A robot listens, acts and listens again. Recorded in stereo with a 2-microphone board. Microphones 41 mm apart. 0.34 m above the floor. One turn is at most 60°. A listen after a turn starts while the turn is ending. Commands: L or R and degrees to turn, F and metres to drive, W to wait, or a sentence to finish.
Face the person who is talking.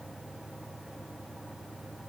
W
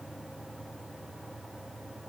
W
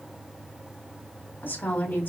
L50
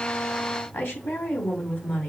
L60
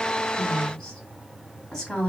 L10
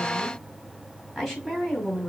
Facing the woman speaking, 2 to 4 m away.